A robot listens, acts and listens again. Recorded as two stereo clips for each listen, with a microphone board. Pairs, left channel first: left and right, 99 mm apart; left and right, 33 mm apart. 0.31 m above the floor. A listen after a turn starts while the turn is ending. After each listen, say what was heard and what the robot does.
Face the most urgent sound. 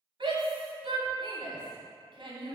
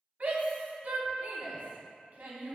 The shout: about 55° right or 125° right. Turn 55° right.
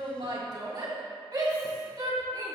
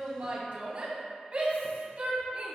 So it is at 55° right. Turn 55° right.
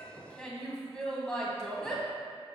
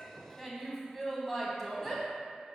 Facing the shout.